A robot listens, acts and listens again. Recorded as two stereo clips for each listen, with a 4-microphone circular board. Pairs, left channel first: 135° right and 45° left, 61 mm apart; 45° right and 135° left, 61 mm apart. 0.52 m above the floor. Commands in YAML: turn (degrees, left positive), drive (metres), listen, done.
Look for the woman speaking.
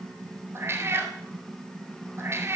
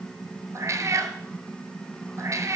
listen: true
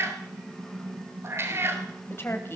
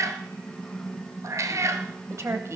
turn: 175
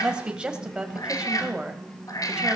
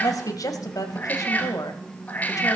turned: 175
turn: -30
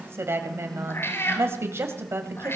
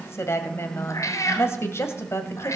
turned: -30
done: "Found it: a woman speaking, straight ahead, 2 to 4 m away."